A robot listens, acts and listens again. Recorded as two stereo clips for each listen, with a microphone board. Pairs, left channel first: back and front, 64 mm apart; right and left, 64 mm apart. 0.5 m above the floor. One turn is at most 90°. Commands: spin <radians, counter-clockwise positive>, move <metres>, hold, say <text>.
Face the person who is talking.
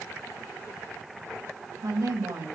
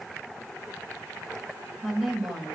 say Found it: a woman speaking, straight ahead.